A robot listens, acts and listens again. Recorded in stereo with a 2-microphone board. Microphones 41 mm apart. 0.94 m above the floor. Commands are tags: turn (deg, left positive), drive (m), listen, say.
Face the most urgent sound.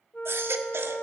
<turn deg="-90"/>
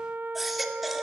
<say>Found it: a baby crying, straight ahead, 2 to 4 m away.</say>